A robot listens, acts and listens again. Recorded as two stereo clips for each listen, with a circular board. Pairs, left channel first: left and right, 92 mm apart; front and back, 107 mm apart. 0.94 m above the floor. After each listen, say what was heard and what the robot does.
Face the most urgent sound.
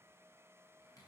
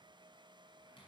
Keep listening.
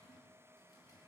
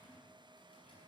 Keep listening.
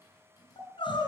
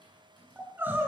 The crying: 110° left. Turn 110° left.
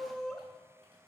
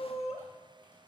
Facing the crying, 2 to 4 m away.